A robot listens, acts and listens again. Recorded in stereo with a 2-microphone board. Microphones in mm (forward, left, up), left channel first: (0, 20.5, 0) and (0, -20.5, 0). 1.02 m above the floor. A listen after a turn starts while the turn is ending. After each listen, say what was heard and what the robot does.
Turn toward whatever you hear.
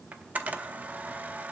The camera shutter: about 40° right or 140° right. Turn 40° right.
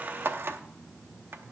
So it is at 95° right. Turn 95° right.
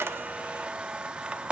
The camera shutter is now 30° right. Turn 30° right.
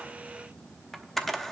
Facing the camera shutter.